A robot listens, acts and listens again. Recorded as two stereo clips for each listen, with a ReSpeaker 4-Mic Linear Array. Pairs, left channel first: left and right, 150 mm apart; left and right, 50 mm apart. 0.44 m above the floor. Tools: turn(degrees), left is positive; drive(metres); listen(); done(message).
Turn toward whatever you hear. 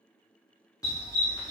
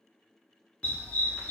turn(degrees=30)
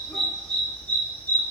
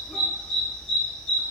turn(degrees=15)
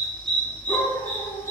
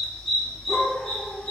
turn(degrees=20)
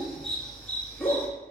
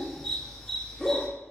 turn(degrees=15)
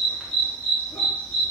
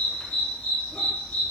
turn(degrees=10)
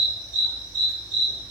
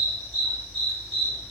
done("Found it: a dog barking, straight ahead, 1 to 2 m away.")